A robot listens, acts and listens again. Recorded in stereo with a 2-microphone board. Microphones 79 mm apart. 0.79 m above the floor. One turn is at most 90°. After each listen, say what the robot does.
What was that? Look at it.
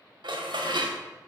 Turn 90° right.
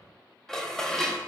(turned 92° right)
Turn 10° left.
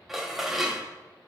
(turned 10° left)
Found it: dishes clattering, straight ahead.